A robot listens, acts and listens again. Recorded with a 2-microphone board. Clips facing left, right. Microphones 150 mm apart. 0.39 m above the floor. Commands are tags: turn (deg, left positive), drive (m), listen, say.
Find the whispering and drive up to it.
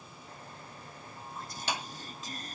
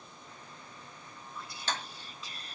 <turn deg="45"/>
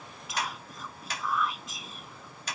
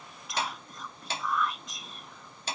<drive m="1.0"/>
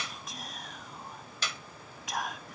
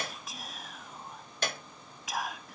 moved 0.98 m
<drive m="1.0"/>
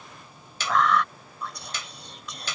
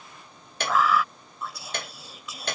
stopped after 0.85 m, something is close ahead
<say>Arrived at the whispering, straight ahead.</say>